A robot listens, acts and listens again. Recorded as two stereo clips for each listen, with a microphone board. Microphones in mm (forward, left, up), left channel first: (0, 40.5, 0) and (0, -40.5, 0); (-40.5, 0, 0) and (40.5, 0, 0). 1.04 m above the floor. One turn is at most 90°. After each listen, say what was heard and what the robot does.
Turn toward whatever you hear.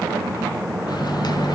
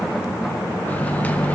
The microwave: 110° left. Turn 90° left.
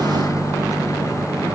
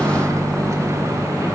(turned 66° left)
The microwave is now 45° left. Turn 45° left.
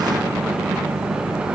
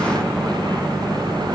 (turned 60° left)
The microwave is now 15° right. Turn 15° right.
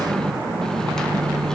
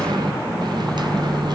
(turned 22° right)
The microwave is now 10° left. Turn 10° left.
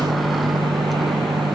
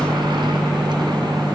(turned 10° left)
Facing the microwave, under 1 m away.